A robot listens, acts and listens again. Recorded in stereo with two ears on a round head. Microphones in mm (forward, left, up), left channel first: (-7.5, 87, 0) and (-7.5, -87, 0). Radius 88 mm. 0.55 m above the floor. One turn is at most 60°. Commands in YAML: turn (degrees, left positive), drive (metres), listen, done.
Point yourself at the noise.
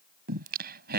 turn: -55
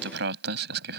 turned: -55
turn: -55
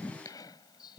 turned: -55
turn: 20
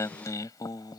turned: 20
turn: 20
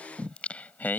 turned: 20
turn: 10
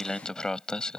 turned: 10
done: "Found it: singing, straight ahead."